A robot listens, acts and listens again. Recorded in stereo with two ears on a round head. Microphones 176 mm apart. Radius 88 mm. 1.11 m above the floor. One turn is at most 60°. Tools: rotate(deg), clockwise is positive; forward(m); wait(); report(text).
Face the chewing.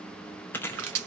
rotate(-30)
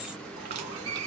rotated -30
wait()
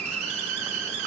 wait()
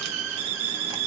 report("I heard chewing, but can't make it out now. It was about 20° right or 140° left.")